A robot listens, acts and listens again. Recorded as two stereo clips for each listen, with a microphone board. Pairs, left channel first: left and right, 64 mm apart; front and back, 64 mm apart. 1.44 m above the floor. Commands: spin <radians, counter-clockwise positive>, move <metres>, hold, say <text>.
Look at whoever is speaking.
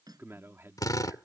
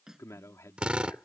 spin -0.70
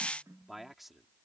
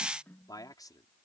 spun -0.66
say Found it: a man speaking, straight ahead.